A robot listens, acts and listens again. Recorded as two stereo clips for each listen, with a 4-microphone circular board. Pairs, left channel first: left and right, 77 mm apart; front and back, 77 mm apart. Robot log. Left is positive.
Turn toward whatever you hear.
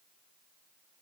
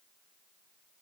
cmd idle
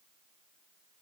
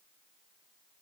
cmd idle
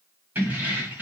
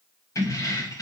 note: The keys jangling: 30° right.
cmd yaw -30
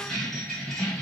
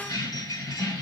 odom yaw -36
end: Found it: keys jangling, straight ahead.